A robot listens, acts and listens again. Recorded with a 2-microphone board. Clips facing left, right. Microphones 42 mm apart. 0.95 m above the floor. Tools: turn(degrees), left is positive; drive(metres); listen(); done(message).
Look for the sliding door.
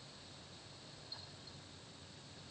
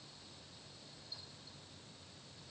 listen()
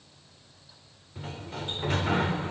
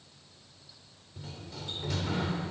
turn(degrees=40)
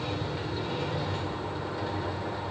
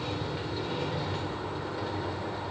done("Found it: a sliding door, straight ahead.")